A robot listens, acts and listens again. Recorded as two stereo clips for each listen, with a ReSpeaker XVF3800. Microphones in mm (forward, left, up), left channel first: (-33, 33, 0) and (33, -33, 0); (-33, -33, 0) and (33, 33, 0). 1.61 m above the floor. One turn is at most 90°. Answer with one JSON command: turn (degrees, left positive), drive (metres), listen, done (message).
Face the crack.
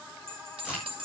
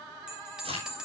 {"turn": 35}
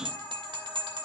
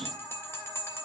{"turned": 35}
{"done": "I heard a crack from this way, but can't make it out now."}